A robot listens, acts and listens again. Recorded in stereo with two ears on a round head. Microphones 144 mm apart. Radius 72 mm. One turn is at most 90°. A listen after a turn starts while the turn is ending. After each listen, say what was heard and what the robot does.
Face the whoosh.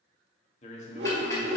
The whoosh: about 70° right or 110° right. Turn 70° right.
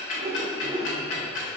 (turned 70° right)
So it is at 25° right. Turn 25° right.
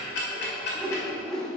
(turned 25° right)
Facing the whoosh.